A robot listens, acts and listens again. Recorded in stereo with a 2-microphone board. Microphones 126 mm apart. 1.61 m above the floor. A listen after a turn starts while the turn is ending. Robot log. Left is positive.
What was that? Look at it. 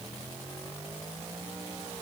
cmd idle
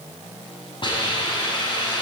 note: The hiss: about 40° left or 140° left.
cmd yaw +40
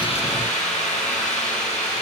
note: So it is at 100° left.
cmd yaw +100
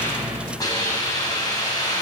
note: The hiss is now 30° left.
cmd yaw +30
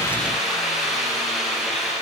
end: Found it: a hiss, straight ahead.